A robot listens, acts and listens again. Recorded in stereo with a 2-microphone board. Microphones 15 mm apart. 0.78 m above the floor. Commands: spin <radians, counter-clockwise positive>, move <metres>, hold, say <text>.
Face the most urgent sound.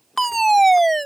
spin 0.52
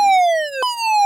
spin -0.35
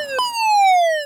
say Found it: a fire alarm, straight ahead.